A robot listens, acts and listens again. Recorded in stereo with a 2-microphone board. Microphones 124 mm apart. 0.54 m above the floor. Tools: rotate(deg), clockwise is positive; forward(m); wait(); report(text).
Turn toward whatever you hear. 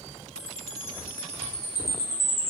rotate(-20)
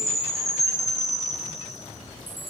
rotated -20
report("Facing the chime.")